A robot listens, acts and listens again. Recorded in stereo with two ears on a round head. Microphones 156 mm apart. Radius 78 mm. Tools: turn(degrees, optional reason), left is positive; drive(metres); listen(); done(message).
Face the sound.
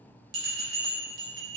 turn(degrees=-60, reason="The bell: about 60° right or 120° right.")
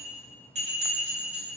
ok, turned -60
turn(degrees=-45, reason="So it is at 45° right.")
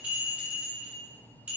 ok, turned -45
turn(degrees=-10, reason="The bell is now 10° right.")
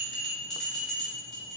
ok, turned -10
done("Facing the bell, 1 to 2 m away.")